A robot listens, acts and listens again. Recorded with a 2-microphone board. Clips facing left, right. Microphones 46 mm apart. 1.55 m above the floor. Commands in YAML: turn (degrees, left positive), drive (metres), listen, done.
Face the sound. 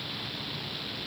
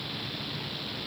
listen: true
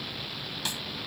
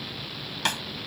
turn: -65
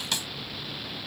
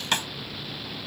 turn: -45
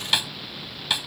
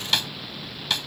turn: 10
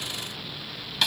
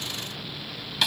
done: "Facing the snare drum."